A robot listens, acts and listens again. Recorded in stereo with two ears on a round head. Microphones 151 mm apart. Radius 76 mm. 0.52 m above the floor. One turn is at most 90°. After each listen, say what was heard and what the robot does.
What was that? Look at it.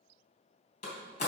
The door slam: about 45° left or 135° left. Turn 45° left.
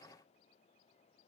Keep listening.
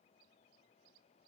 I heard a door slam, but can't make it out now. It was about straight ahead or 90° left.